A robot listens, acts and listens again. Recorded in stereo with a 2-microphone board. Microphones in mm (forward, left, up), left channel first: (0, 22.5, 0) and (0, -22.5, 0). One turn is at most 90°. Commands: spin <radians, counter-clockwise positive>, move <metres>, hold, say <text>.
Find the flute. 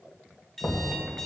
hold
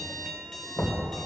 hold
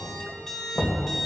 say I can't make out a flute, only knocking and an alarm clock.